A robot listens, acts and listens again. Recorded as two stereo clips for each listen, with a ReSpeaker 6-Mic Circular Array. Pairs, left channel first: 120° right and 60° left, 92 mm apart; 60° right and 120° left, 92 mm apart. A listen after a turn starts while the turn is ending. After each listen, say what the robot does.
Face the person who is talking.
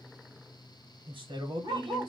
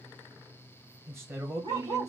Turn 70° left.
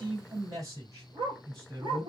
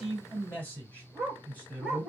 Turn 15° left.
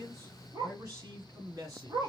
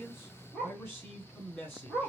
Facing the man speaking.